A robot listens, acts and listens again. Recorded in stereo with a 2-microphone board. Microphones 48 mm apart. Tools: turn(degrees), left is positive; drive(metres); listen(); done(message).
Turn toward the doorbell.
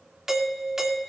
turn(degrees=-30)
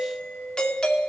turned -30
turn(degrees=25)
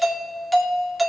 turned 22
done("Facing the doorbell, 2 to 4 m away.")